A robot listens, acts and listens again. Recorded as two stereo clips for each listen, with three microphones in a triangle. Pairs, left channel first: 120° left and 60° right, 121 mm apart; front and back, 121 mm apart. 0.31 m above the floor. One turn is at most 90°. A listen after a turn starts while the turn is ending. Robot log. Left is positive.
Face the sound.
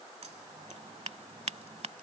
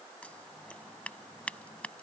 note: The scissors: 75° right.
cmd yaw -75
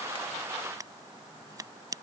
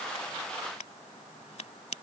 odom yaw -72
end: Found it: scissors, straight ahead.